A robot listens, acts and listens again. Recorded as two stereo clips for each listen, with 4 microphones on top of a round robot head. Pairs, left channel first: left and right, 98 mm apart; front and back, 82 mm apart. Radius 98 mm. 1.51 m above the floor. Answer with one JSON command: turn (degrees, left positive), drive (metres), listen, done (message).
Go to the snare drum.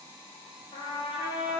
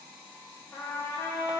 {"listen": true}
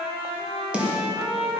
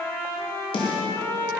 {"turn": -10}
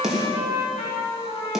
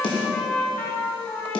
{"drive": 1.0}
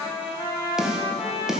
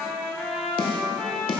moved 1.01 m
{"drive": 1.0}
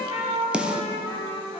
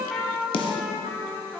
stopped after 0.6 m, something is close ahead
{"turn": -10}
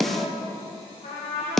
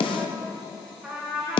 {"done": "I am next to the snare drum."}